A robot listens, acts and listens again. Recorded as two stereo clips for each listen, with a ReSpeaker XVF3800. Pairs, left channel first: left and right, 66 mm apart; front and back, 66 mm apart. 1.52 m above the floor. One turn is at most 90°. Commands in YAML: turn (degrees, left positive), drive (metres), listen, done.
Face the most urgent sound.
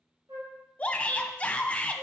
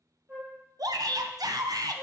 turn: 90
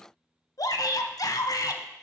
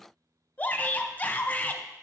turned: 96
turn: 65
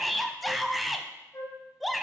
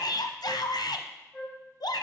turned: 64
done: "Facing the shout."